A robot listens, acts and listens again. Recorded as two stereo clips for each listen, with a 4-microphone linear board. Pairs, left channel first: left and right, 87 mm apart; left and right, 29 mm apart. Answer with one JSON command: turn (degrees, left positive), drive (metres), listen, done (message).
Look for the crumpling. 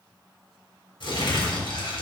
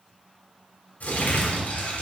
{"turn": 70}
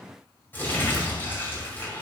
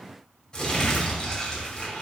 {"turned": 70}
{"turn": 25}
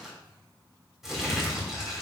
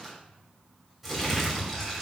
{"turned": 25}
{"done": "Found it: crumpling, straight ahead, 2 to 4 m away."}